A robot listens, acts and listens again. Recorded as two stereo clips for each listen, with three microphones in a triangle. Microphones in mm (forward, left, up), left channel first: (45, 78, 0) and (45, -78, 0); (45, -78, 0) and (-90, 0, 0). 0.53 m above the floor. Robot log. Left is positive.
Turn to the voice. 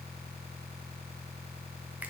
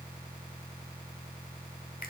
cmd idle
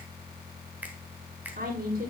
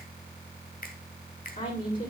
note: The woman speaking: 60° right.
cmd yaw -60
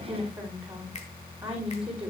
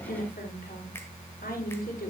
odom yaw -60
note: The woman speaking is now 10° right.
cmd yaw -10
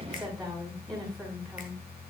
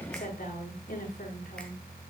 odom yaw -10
end: Found it: a woman speaking, straight ahead, over 4 m away.